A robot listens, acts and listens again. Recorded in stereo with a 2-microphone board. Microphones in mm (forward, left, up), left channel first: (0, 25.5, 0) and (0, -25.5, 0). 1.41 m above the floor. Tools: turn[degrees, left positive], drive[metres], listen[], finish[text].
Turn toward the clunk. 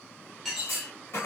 Thought: The clunk: about 60° left or 120° left.
Action: turn[60]
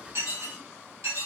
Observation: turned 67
Action: listen[]
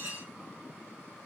Action: finish[I heard a clunk, but can't make it out now. It was about 5° right or 50° left.]